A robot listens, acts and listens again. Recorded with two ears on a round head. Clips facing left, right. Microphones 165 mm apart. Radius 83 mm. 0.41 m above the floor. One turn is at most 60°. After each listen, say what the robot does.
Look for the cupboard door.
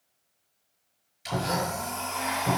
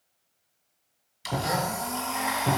Turn 20° right.
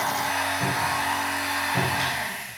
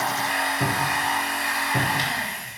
Turn 60° right.
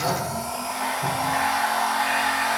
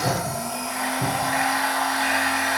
Turn 60° right.
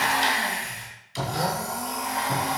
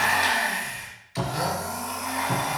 Turn 15° right.
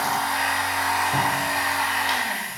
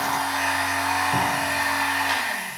Keep listening.
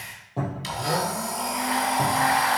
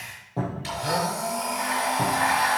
Facing the cupboard door.